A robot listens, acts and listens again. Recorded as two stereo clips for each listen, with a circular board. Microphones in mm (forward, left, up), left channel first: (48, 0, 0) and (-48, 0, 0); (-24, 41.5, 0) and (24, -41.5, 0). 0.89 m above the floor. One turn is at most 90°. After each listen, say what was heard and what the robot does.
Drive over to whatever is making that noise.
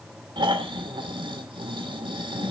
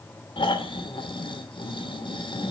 The snoring: 150° left. Turn 90° left.
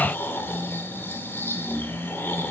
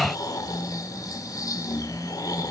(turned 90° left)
The snoring is now 70° left. Turn 70° left.
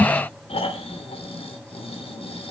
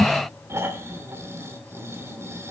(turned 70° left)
Drive 1.0 m forward.
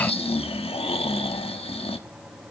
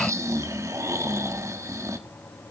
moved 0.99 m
Drive 1.0 m forward.
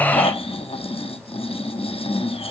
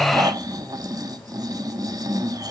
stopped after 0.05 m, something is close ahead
The snoring is now 10° right. Turn 10° right.
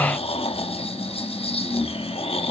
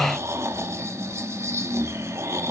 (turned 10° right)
I am next to the snoring.